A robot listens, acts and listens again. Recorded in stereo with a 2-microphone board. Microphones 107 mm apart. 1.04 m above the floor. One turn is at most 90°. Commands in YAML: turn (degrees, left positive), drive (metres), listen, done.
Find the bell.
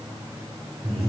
listen: true
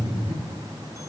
listen: true
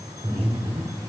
done: "I can't make out a bell, only breathing."